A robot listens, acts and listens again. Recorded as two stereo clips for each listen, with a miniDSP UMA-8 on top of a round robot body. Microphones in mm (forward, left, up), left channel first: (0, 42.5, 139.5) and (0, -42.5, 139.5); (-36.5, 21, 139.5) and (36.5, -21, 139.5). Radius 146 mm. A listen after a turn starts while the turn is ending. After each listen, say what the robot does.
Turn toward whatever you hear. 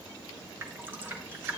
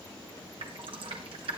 Turn 25° right.
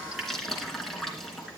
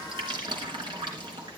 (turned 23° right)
Found it: dripping, straight ahead, 2 to 4 m away.